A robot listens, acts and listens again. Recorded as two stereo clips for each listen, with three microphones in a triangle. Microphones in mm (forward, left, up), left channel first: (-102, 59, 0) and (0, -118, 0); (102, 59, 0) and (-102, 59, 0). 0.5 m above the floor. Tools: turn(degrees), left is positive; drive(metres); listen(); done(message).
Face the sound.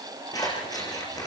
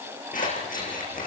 turn(degrees=50)
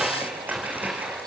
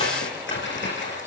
turn(degrees=25)
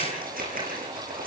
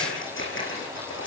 turn(degrees=-15)
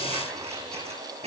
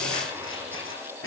done("Facing the scissors, over 4 m away.")